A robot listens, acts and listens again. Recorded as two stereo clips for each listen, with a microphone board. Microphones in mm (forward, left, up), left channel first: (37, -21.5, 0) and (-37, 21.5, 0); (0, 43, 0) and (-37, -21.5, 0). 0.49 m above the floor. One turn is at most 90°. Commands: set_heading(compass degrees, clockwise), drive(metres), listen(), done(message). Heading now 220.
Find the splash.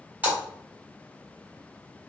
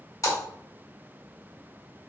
set_heading(135)
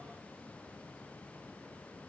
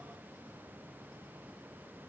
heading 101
set_heading(136)
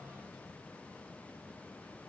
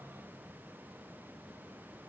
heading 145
set_heading(135)
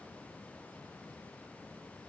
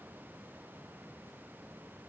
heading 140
done("Facing where the splash came from. I can't hear it now.")